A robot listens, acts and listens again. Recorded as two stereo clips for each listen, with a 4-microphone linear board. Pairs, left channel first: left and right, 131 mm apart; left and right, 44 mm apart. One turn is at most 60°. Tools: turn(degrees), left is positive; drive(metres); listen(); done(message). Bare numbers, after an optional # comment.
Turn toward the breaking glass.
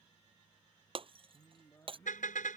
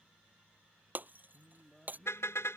# The breaking glass: about 45° right or 135° right.
turn(-45)
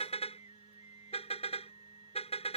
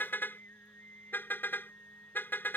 listen()
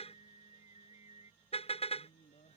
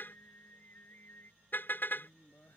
done("I heard breaking glass, but can't make it out now. It was about straight ahead or 90° right.")